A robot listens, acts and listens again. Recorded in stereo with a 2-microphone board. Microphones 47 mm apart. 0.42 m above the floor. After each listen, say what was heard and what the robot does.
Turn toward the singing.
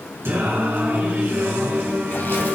The singing: about 50° right or 130° right. Turn 50° right.
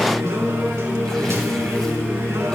So it is at 75° right. Turn 75° right.
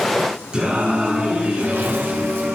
The singing is now 25° right. Turn 25° right.
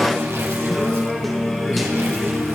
Facing the singing, over 4 m away.